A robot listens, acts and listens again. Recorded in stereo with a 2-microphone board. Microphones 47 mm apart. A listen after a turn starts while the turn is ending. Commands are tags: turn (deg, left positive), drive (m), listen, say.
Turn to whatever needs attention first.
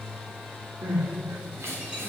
<turn deg="-70"/>
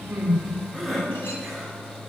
<say>Facing the crying.</say>